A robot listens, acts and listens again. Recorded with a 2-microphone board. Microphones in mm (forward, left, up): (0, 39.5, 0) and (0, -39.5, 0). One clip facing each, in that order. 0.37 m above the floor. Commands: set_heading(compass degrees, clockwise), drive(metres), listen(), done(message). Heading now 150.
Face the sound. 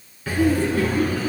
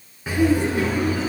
set_heading(170)
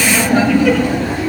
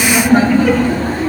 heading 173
set_heading(308)
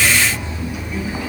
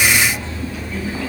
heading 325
set_heading(305)
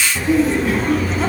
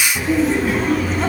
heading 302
done("Found it: laughter, straight ahead, 2 to 4 m away.")